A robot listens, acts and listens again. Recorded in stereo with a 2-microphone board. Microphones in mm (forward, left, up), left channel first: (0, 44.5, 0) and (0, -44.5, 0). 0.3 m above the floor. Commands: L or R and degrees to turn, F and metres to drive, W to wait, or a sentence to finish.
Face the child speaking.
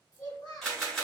L50
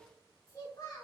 L35
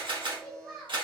Found it: a child speaking, straight ahead, 1 to 2 m away.